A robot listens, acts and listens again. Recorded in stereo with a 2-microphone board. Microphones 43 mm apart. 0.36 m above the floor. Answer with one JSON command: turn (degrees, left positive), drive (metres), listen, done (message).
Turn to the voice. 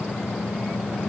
{"listen": true}
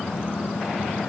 {"listen": true}
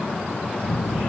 {"turn": 25}
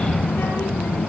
{"turn": 130}
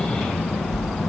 {"done": "Facing the child speaking."}